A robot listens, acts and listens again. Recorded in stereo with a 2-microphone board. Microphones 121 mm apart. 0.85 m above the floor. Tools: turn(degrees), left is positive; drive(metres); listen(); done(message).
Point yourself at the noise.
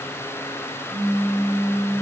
turn(degrees=-90)
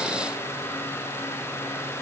done("I heard a pop from this way, but can't make it out now.")